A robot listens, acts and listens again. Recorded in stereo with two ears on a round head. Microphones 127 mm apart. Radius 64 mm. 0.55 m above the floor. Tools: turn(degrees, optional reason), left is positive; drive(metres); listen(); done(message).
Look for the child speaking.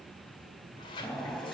listen()
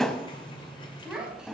turn(degrees=-30)
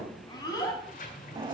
turn(degrees=30, reason="So it is at 30° left.")
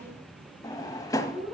turn(degrees=-15, reason="The child speaking is now 15° right.")
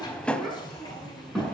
done("Facing the child speaking, over 4 m away.")